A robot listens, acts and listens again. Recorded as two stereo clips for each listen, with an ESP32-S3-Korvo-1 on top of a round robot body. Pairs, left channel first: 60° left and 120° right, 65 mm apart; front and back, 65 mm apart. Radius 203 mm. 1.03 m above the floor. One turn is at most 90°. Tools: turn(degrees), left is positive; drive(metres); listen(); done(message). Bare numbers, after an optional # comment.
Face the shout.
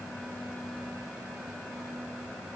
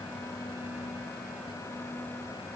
listen()
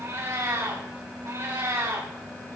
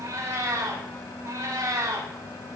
listen()
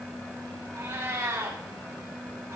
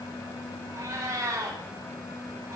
done("I can't make out a shout, only a cat meowing.")